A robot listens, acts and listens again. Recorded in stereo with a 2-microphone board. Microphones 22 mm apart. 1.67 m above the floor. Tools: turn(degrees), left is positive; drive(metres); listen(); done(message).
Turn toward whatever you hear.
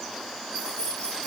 turn(degrees=40)
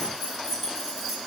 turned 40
turn(degrees=-15)
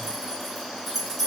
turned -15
done("Found it: keys jangling, straight ahead, 2 to 4 m away.")